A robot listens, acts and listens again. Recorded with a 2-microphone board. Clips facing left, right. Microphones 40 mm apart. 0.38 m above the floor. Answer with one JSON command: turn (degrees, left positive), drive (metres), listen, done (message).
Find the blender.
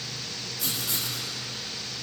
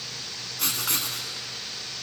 {"listen": true}
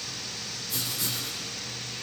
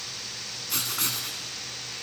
{"listen": true}
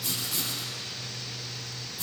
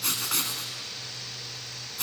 {"done": "I can't make out a blender to turn to."}